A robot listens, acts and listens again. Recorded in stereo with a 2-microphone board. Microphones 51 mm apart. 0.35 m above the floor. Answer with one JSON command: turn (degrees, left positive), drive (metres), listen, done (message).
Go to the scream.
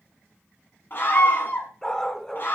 {"turn": 45}
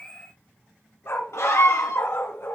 {"turn": 85}
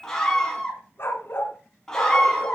{"turn": 10}
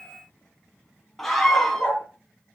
{"drive": 1.0}
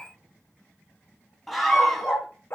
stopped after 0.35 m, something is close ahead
{"done": "Blocked. The scream is further on, straight ahead."}